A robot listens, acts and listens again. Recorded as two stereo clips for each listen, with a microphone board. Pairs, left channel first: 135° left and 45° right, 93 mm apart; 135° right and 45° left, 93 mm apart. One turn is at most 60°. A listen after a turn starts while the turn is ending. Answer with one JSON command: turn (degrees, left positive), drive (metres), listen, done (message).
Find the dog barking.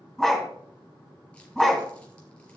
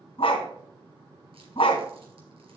{"turn": -60}
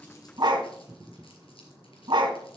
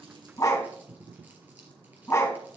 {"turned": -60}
{"turn": -60}
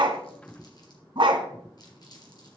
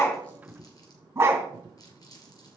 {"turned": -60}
{"turn": -20}
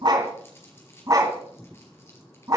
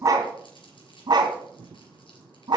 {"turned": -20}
{"done": "Found it: a dog barking, straight ahead."}